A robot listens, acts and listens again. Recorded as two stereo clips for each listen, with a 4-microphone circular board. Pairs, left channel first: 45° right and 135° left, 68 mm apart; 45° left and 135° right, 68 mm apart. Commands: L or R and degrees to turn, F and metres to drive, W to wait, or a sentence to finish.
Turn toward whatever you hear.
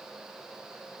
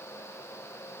W
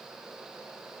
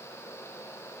W
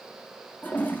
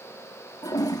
L20
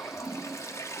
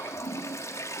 Found it: a toilet flushing, straight ahead.